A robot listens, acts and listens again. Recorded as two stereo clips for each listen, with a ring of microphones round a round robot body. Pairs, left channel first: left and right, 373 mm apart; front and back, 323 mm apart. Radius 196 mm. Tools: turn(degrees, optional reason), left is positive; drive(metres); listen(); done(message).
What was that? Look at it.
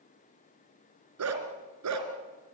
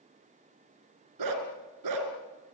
turn(degrees=-140, reason="The dog barking: 140° right.")
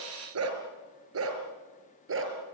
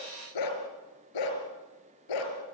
turn(degrees=-30, reason="The dog barking is now 30° right.")
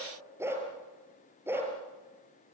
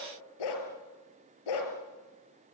done("Facing the dog barking, over 4 m away.")